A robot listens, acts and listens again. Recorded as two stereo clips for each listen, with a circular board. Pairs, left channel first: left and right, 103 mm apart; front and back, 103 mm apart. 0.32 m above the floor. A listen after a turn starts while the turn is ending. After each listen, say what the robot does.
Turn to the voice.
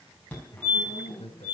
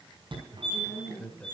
Turn 75° left.
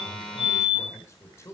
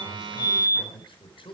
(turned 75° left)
Turn 30° left.
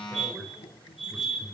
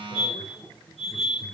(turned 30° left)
Keep listening.
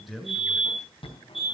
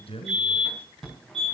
Found it: a man speaking, straight ahead.